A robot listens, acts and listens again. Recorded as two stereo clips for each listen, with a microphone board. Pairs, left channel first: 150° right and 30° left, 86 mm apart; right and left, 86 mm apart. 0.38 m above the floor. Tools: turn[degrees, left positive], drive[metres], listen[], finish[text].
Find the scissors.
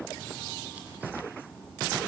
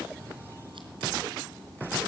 Action: listen[]
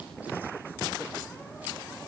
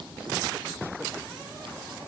Action: listen[]
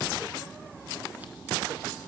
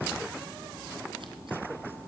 Action: finish[I can't make out scissors.]